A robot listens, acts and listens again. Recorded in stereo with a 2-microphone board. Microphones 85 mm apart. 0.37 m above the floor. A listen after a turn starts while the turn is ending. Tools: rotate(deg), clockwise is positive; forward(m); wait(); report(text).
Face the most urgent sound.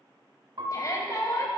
rotate(-40)
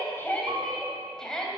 rotate(-10)
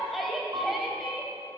report("Found it: a shout, straight ahead, 2 to 4 m away.")